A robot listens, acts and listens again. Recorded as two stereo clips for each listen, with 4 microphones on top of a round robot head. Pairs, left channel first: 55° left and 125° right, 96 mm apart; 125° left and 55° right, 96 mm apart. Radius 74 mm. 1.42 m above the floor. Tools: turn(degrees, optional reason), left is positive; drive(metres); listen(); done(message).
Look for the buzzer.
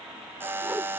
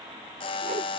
turn(degrees=165, reason="The buzzer: 165° left.")
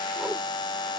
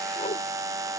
done("Found it: a buzzer, straight ahead.")